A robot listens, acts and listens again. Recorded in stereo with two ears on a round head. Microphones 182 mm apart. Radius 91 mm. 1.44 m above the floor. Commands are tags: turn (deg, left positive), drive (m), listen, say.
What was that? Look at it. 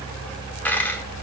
<turn deg="30"/>
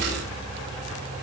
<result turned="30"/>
<listen/>
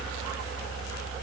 <say>I heard a dropped coin, but can't make it out now. It was about 20° right or 140° left.</say>